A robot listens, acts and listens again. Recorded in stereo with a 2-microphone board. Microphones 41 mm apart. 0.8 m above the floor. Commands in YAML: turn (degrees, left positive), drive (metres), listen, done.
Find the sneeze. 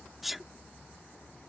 turn: -30
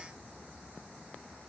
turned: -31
listen: true
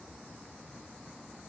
done: "I heard a sneeze, but can't make it out now. It was about 30° left or 145° right."